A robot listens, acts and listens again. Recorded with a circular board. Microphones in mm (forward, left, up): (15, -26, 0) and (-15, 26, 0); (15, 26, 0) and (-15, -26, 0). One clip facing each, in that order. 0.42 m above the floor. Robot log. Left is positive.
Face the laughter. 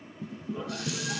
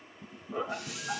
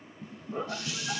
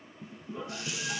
note: The laughter: 90° left.
cmd yaw +90
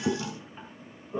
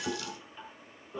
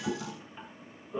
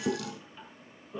note: The laughter is now 15° right.
cmd yaw -15
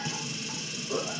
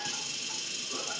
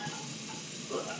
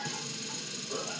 note: The laughter is now 20° right.
cmd yaw -20
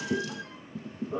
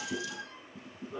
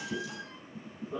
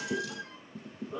note: The laughter is now 25° right.
cmd yaw -25
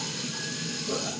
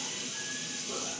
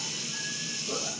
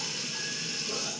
cmd idle
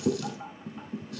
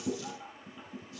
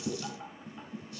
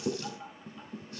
end: Found it: laughter, straight ahead.